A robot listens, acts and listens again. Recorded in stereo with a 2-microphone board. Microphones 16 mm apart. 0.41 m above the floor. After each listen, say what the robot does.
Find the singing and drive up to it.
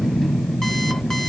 Keep listening.
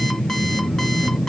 Keep listening.
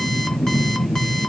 I can't make out singing.